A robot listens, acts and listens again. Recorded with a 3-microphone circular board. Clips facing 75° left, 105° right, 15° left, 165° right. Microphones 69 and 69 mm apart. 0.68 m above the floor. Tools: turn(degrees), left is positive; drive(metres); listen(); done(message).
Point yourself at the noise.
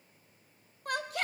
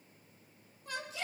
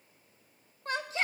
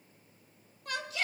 turn(degrees=65)
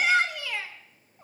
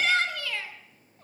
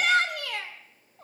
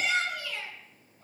done("Found it: a shout, straight ahead, 2 to 4 m away.")